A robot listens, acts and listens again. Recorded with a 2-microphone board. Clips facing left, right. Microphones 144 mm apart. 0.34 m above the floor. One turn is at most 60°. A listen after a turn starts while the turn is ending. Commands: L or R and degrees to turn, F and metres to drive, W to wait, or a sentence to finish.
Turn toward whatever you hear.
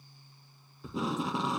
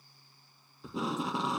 L30
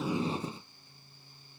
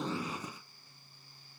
L60
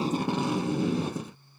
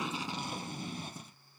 L60
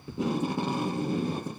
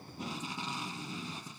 L55
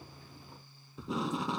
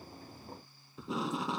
Found it: tape being pulled, straight ahead.